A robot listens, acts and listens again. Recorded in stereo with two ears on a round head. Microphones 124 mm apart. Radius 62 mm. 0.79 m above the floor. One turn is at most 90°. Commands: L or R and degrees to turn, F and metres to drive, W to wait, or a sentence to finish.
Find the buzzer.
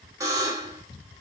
R25
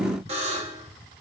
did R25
R90
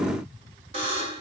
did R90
R40
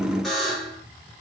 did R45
Found it: a buzzer, straight ahead, 1 to 2 m away.